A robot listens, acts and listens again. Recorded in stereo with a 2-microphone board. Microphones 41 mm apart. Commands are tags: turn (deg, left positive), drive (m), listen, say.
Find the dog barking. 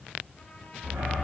<turn deg="-70"/>
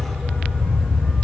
<say>Facing the dog barking, over 4 m away.</say>